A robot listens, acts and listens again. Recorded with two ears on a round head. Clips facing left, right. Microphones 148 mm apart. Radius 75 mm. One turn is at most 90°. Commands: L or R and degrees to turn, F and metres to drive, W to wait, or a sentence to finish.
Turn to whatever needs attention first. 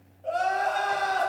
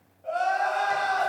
L35
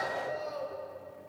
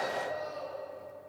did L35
L90
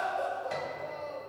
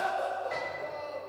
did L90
L10
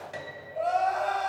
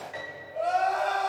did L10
Found it: crying, straight ahead.